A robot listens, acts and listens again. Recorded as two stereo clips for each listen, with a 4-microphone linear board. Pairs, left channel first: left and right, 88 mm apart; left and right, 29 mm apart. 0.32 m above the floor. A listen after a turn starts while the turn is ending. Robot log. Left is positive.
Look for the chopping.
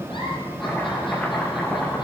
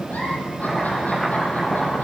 cmd yaw +30
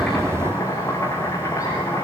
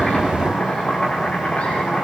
note: So it is at 140° left.
cmd yaw +140
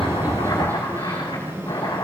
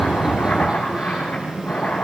note: The chopping is now 60° left.
cmd yaw +60
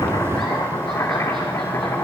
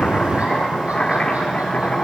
note: The chopping is now 35° left.
cmd yaw +35
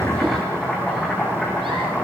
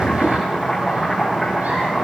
end: Found it: chopping, straight ahead.